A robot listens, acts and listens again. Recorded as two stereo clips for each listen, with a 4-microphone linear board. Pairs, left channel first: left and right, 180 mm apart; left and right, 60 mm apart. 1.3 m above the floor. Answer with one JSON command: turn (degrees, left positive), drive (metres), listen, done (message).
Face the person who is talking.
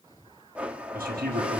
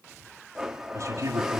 {"turn": -55}
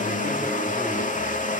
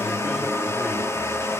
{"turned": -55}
{"listen": true}
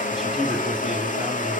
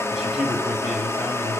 {"listen": true}
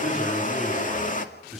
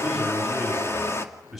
{"done": "Facing the man speaking, over 4 m away."}